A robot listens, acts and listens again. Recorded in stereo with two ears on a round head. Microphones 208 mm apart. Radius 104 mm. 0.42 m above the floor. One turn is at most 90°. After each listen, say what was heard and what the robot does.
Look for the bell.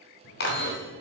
The bell: about 55° left or 125° left. Turn 55° left.
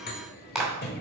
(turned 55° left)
So it is at 55° left. Turn 55° left.
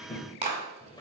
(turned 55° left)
The bell is now 20° left. Turn 20° left.
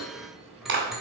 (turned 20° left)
Found it: a bell, straight ahead, 1 to 2 m away.